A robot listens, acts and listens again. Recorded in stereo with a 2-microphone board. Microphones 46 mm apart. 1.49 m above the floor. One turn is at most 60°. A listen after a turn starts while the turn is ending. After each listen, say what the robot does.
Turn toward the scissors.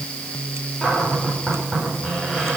Keep listening.
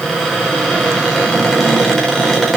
Keep listening.
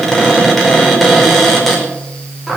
I can't make out scissors, only a cupboard door.